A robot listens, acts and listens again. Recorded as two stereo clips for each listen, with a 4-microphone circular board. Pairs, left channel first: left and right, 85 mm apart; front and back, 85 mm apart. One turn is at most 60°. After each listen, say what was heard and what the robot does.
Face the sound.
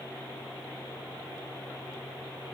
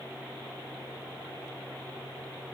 Keep listening.
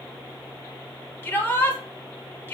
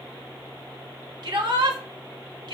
The shout: 155° left. Turn 60° left.
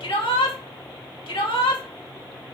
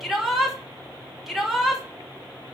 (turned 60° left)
The shout is now 90° left. Turn 60° left.
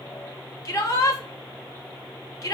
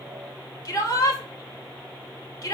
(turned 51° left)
The shout is now 45° left. Turn 45° left.
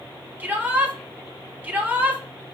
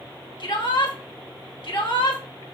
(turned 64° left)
The shout is now 20° right. Turn 20° right.
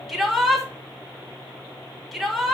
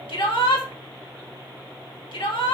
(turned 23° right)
Facing the shout, 2 to 4 m away.